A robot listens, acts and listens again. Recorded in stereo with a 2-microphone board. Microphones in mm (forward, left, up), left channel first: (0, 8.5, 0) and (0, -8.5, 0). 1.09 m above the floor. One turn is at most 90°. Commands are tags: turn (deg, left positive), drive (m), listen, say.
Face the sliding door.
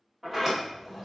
<turn deg="-25"/>
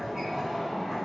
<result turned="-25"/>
<turn deg="-90"/>
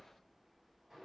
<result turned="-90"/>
<turn deg="-40"/>
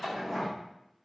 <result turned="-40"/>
<turn deg="15"/>
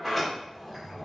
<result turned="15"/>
<say>Facing the sliding door, 1 to 2 m away.</say>